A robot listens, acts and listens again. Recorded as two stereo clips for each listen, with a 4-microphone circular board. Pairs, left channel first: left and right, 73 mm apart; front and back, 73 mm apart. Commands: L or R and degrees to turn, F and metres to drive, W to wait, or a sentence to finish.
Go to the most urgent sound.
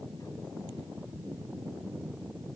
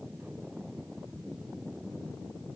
W
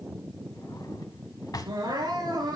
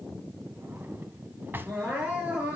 R110
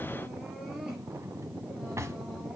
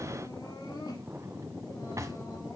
F1.0
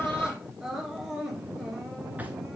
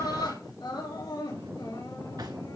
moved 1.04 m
F1.0
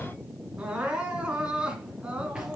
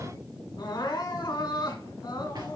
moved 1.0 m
R15
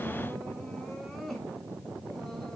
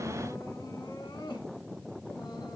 F1.0
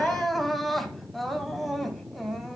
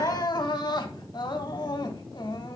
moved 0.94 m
F1.0
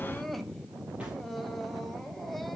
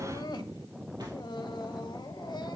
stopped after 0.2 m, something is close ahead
I am next to the crying.